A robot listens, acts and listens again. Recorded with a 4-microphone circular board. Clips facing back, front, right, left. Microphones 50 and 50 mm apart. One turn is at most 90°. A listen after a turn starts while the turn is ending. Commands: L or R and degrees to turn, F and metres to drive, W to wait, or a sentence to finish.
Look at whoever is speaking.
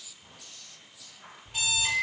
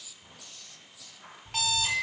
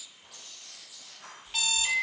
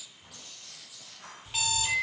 W
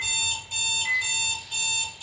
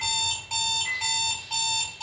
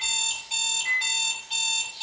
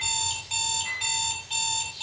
W
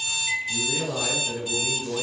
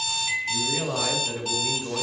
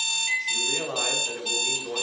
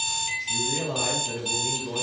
R55
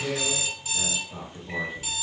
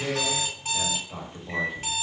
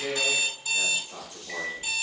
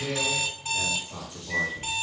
R10
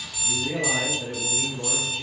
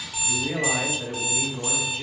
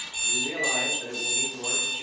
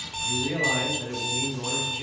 Found it: a man speaking, straight ahead.